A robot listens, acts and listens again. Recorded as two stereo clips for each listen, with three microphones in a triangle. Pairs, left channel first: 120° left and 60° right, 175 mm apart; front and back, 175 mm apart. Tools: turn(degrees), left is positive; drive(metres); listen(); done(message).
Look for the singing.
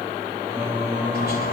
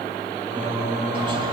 turn(degrees=-140)
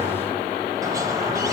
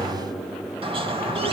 turn(degrees=-35)
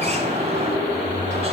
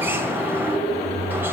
turn(degrees=-20)
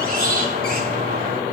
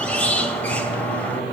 listen()
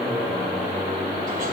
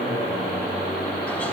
done("Found it: singing, straight ahead.")